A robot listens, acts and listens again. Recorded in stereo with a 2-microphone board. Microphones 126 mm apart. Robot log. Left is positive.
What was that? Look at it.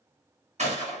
note: The gunshot: about 70° right or 110° right.
cmd yaw -70
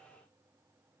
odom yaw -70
cmd idle
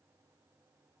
end: I heard a gunshot, but can't make it out now. It was about straight ahead or 40° right.